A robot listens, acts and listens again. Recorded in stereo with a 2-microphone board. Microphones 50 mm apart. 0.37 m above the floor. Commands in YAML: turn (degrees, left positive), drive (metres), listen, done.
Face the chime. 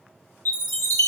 turn: 55
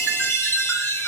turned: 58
turn: 65
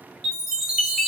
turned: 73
turn: -10
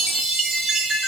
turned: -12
done: "Facing the chime."